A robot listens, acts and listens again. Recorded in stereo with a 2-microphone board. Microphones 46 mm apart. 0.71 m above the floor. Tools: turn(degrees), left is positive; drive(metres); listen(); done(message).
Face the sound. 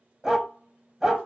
turn(degrees=-30)
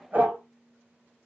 turn(degrees=-135)
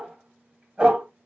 turn(degrees=-20)
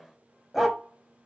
done("Found it: a dog barking, straight ahead, 1 to 2 m away.")